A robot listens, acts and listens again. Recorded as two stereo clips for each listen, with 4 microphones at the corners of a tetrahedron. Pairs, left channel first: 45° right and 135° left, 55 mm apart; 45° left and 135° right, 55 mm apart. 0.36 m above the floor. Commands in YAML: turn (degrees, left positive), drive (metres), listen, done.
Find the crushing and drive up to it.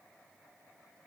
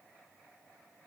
listen: true
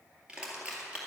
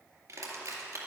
turn: -155
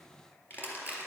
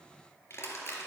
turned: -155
drive: 1.0
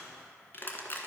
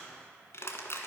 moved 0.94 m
drive: 1.0
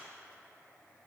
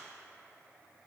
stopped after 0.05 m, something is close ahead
listen: true
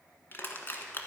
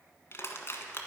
done: "I am next to the crushing."